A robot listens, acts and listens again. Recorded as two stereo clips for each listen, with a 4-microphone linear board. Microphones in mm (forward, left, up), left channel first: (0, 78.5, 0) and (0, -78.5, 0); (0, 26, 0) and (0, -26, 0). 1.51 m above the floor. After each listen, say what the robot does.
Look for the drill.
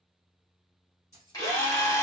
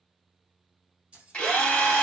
Turn 25° left.
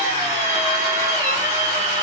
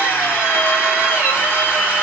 Turn 125° left.
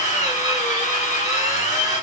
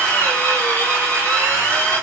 Turn 55° left.
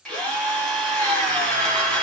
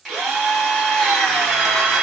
Found it: a drill, straight ahead.